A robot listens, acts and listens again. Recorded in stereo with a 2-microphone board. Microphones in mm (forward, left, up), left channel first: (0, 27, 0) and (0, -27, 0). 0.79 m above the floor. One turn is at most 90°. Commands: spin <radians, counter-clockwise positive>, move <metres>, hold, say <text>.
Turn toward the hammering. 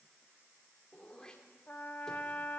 hold
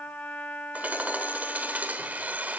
spin -0.52
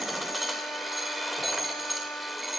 say Found it: hammering, straight ahead.